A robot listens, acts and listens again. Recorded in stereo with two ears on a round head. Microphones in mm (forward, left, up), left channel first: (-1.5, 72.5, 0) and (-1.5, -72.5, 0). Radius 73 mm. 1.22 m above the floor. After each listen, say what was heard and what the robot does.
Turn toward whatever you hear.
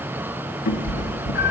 The cat meowing: about 50° left or 130° left. Turn 50° left.
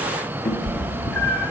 So it is at 10° left. Turn 10° left.
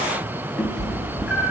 Found it: a cat meowing, straight ahead, 1 to 2 m away.